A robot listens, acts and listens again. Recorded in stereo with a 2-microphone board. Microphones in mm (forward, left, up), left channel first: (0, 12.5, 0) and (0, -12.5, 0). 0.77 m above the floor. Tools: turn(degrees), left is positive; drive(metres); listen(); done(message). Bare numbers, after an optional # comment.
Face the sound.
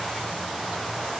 listen()
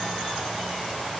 listen()
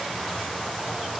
done("I can't make out anything.")